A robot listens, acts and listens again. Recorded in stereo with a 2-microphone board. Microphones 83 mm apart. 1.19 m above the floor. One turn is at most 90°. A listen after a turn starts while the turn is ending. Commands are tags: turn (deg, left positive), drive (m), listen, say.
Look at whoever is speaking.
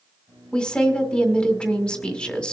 <turn deg="30"/>
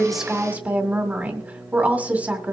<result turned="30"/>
<turn deg="-20"/>
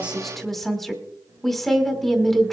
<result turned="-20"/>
<say>Found it: a woman speaking, straight ahead.</say>